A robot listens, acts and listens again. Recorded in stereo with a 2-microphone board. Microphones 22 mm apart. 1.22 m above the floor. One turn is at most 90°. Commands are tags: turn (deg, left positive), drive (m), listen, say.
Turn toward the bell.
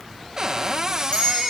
<turn deg="65"/>
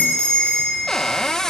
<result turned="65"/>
<turn deg="50"/>
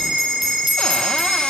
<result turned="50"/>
<say>Found it: a bell, straight ahead.</say>